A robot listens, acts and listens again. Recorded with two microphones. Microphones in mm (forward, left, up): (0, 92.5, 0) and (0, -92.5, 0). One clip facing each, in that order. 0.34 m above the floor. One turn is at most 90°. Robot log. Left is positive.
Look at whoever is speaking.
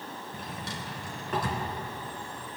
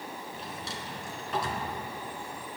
cmd idle
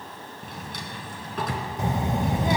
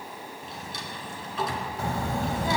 note: The child speaking: about 20° left or 160° left.
cmd yaw +20
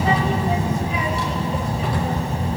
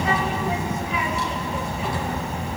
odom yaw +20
note: So it is at 135° left.
cmd yaw +90
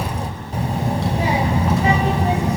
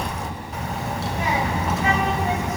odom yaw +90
note: The child speaking is now 40° left.
cmd yaw +40
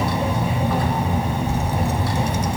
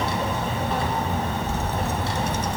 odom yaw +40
note: The child speaking is now 15° left.
cmd yaw +15
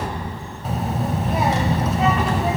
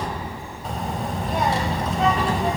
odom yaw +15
end: Facing the child speaking.